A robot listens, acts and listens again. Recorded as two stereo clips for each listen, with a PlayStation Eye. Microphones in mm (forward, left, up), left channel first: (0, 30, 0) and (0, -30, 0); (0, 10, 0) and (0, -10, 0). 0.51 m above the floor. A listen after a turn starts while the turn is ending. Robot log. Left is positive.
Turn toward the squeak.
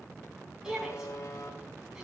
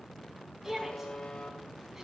cmd idle
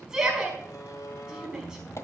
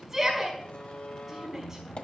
note: The squeak: about 50° left or 130° left.
cmd yaw +50
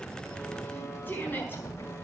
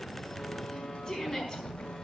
note: So it is at 80° left.
cmd yaw +80
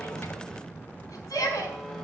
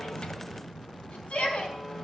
note: The squeak is now 30° left.
cmd yaw +30
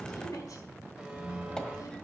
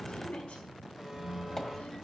note: The squeak is now 15° left.
cmd yaw +15
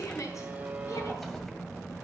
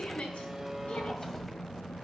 end: Facing the squeak, 1 to 2 m away.